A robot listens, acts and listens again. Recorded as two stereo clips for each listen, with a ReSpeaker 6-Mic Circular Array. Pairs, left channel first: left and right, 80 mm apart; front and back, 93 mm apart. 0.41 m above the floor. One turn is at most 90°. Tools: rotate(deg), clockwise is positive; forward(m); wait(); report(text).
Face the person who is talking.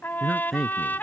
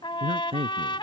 rotate(-90)
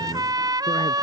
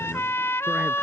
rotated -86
rotate(-90)
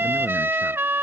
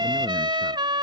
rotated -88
rotate(-10)
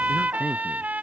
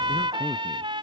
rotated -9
report("Facing where the man speaking came from. I can't hear it now.")